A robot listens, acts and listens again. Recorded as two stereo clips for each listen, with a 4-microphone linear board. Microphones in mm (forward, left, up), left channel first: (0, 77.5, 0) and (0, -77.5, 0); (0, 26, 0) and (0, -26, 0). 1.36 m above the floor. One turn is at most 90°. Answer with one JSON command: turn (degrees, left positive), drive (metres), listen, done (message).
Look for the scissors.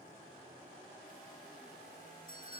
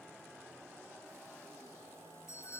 {"listen": true}
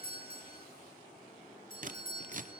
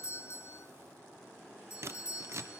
{"turn": -55}
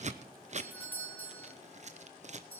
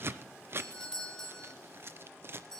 {"turn": -55}
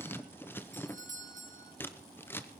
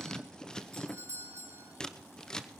{"turn": 15}
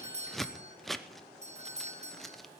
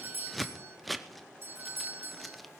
{"done": "Facing the scissors."}